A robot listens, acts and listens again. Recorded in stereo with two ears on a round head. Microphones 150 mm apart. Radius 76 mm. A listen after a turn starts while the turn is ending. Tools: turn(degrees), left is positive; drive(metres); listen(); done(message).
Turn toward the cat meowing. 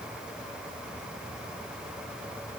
listen()
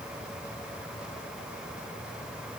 listen()
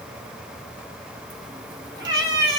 turn(degrees=-30)
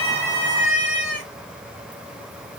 turn(degrees=-120)
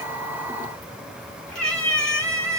done("Facing the cat meowing.")